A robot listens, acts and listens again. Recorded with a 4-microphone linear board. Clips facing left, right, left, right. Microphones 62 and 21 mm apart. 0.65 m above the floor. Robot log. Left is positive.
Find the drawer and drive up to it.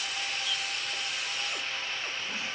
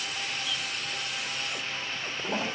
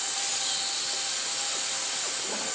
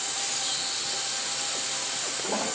cmd idle
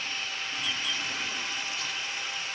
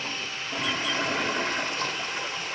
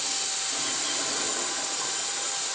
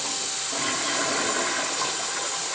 cmd idle
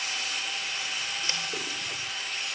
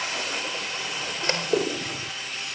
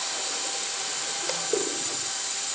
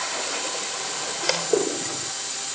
end: I can't make out a drawer to turn to.